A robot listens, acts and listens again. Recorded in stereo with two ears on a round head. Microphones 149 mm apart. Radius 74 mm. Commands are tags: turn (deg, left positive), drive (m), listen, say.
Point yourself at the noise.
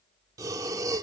<turn deg="-20"/>
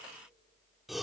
<say>Found it: breathing, straight ahead.</say>